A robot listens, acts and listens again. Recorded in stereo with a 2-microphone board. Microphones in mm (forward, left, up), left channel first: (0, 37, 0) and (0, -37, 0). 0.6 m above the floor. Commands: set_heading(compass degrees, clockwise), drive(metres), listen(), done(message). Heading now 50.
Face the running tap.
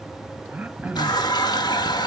set_heading(340)
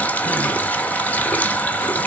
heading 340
set_heading(315)
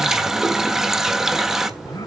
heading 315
done("Found it: a running tap, straight ahead, 1 to 2 m away.")